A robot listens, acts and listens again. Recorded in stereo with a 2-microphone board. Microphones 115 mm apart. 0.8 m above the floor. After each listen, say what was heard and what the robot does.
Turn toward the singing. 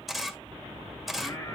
The singing: about 35° left or 145° left. Turn 35° left.
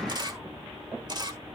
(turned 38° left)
Keep listening.
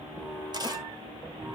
So it is at 15° right. Turn 15° right.
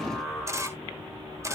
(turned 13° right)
Found it: singing, straight ahead.